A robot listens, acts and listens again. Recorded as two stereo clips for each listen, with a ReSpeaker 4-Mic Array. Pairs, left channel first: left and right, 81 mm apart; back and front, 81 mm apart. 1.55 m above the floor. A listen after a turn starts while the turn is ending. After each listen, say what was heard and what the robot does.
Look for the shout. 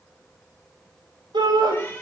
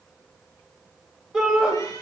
The shout: 85° right. Turn 85° right.
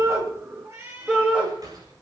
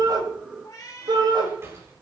The shout is now 10° right. Turn 10° right.
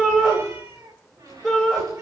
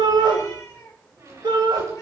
Facing the shout.